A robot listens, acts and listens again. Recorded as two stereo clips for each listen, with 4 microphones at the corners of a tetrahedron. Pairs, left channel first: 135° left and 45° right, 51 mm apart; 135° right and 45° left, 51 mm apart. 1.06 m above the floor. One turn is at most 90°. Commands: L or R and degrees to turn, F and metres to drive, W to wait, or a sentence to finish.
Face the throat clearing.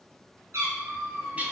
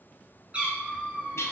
W
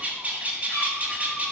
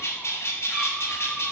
W
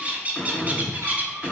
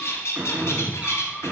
L60
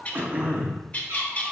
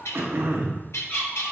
Found it: throat clearing, straight ahead.